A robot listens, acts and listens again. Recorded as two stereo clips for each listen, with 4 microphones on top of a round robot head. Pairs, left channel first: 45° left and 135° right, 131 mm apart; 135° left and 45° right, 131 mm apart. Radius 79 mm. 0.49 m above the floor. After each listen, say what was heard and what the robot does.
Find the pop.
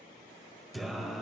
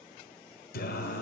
Keep listening.
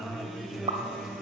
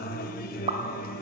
The pop: 90° right. Turn 90° right.
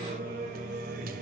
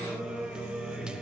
I heard a pop from this way, but can't make it out now.